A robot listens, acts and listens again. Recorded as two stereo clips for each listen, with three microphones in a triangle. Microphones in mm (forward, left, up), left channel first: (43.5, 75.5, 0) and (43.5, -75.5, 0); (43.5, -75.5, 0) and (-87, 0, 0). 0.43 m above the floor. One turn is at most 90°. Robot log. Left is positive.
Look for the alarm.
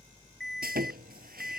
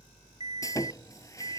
end: Found it: an alarm, straight ahead.